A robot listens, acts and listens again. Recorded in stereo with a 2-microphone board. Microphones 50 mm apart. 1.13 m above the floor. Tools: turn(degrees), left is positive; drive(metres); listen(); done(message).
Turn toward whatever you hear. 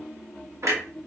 turn(degrees=-70)
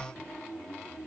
listen()
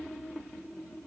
done("I heard a clunk, but can't make it out now. It was about straight ahead or 40° right.")